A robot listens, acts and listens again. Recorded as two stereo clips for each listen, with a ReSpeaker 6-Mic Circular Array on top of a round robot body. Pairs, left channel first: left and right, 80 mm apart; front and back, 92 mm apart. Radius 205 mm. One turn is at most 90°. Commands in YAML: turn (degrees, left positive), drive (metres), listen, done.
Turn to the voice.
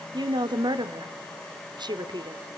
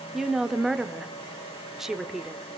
turn: -90
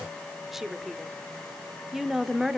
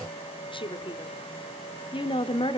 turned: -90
done: "Found it: a woman speaking, straight ahead, 1 to 2 m away."